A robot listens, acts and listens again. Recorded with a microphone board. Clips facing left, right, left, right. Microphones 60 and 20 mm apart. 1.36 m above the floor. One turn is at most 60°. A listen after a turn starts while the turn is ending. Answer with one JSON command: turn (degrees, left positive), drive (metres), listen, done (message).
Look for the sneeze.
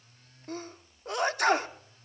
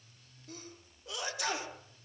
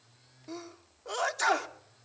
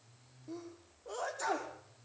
{"turn": 45}
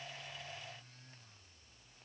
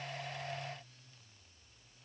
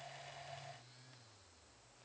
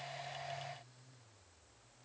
{"listen": true}
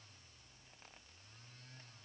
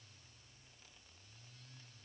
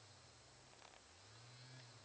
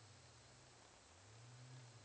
{"done": "I heard a sneeze, but can't make it out now. It was about straight ahead or 90° left."}